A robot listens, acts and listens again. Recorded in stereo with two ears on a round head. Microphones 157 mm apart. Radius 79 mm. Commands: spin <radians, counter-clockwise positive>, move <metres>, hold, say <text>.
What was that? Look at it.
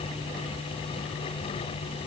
hold
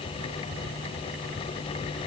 hold
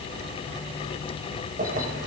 spin -0.87
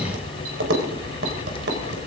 spin -1.22
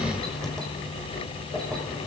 say Found it: keys jangling, straight ahead, over 4 m away.